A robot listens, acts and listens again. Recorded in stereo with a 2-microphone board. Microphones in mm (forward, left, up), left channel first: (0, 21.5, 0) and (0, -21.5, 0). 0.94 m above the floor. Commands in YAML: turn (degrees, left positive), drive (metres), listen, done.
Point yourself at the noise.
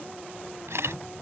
turn: -90
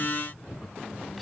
listen: true
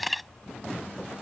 done: "Facing the camera shutter."